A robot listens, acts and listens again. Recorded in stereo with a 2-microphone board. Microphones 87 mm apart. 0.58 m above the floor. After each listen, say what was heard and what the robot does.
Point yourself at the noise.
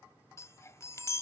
The chime: about 35° left or 145° left. Turn 35° left.
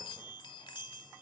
So it is at 110° left. Turn 110° left.
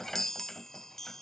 Found it: a chime, straight ahead.